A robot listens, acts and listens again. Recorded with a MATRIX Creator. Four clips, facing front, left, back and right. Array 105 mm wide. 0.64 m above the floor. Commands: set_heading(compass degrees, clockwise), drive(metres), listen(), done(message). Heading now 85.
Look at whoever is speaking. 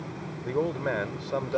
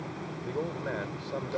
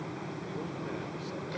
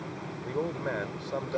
set_heading(95)
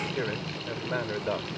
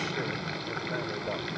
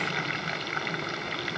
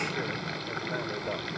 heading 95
listen()
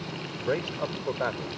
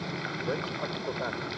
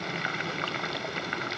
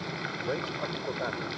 done("Facing the man speaking.")